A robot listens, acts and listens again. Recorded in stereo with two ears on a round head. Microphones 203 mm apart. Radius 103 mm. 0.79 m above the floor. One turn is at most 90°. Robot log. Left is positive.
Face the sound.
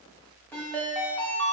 cmd yaw +30
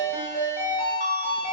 note: So it is at 140° left.
cmd yaw +90
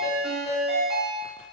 note: The ringtone is now 50° left.
cmd yaw +50
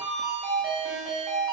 end: Facing the ringtone.